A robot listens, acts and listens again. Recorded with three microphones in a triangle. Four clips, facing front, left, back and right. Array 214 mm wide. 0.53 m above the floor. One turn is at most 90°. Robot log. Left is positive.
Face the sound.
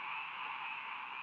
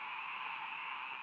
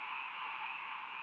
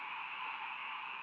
cmd idle
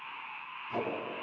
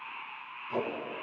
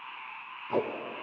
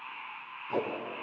note: The tape being pulled: 170° right.
cmd yaw -90
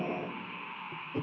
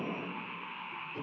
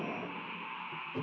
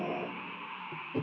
note: The tape being pulled is now 70° right.
cmd yaw -70
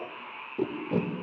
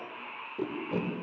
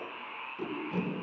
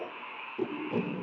note: The tape being pulled is now 10° left.
cmd yaw +10
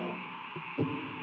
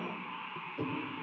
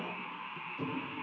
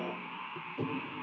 end: Found it: tape being pulled, straight ahead, under 1 m away.